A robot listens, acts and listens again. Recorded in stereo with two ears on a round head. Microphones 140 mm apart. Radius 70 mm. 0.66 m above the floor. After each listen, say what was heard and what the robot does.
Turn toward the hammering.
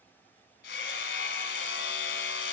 Turn 90° left.
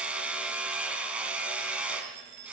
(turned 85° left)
So it is at 10° right. Turn 10° right.
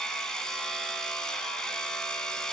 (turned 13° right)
Found it: hammering, straight ahead.